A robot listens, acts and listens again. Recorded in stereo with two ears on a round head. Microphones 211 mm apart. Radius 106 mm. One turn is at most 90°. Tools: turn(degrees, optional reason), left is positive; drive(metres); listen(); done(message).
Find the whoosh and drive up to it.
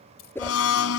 turn(degrees=30)
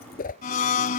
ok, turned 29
turn(degrees=90, reason="So it is at 140° left.")
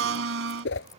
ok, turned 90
turn(degrees=50, reason="The whoosh is now 50° left.")
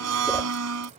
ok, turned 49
listen()
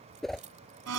drive(metres=1.0)
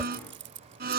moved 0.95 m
listen()
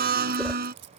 listen()
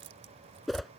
drive(metres=1.0)
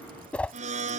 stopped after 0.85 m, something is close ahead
done("I am next to the whoosh.")